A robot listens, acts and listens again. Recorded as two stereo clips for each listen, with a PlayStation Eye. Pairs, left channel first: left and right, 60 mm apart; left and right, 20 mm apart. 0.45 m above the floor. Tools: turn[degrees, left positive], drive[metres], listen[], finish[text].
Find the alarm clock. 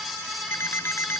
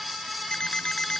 Thought: The alarm clock: about 40° left or 140° left.
Action: turn[40]
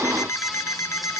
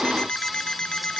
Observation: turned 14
Thought: So it is at 125° left.
Action: turn[125]
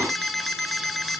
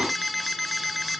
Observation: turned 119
Action: finish[Found it: an alarm clock, straight ahead.]